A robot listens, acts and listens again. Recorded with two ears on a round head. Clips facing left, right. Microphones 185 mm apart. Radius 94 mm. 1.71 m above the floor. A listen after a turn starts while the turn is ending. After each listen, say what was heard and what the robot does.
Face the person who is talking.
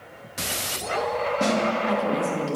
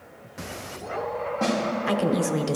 The woman speaking: about 60° right or 120° right. Turn 60° right.
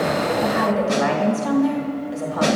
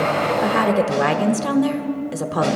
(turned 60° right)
So it is at 60° right. Turn 60° right.
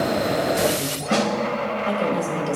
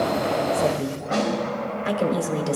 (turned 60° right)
The woman speaking is now 25° right. Turn 25° right.
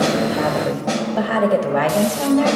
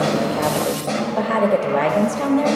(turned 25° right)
Facing the woman speaking.